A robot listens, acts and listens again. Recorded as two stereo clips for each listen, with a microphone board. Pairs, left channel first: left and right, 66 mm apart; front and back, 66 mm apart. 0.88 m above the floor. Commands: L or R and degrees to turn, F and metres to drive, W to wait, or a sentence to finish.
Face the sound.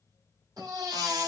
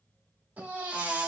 R110
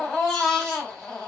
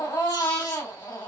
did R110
L10
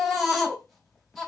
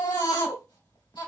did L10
Facing the baby crying, 1 to 2 m away.